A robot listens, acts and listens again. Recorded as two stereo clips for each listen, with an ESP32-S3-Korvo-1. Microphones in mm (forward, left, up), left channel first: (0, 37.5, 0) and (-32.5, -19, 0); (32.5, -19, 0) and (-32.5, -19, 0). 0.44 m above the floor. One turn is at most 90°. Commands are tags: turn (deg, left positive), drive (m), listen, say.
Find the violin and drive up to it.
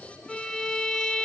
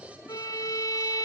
<turn deg="-20"/>
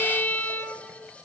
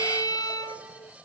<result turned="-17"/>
<drive m="1.0"/>
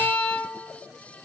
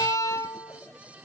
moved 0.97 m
<drive m="1.0"/>
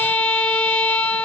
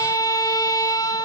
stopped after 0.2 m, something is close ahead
<turn deg="-10"/>
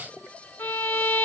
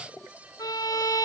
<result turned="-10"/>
<say>Arrived at the violin, straight ahead.</say>